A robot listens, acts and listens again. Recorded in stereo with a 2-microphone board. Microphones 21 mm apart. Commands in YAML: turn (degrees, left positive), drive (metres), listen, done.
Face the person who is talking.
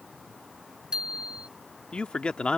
turn: 70
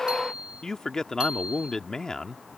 turn: 30
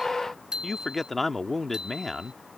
done: "Facing the man speaking."